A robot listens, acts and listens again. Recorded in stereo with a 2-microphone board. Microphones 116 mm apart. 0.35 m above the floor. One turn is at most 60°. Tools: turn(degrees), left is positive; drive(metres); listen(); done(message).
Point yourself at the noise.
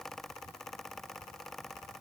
listen()
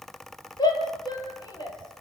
turn(degrees=35)
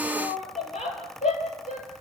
turn(degrees=60)
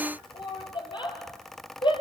turn(degrees=45)
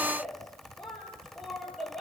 done("Facing the shout.")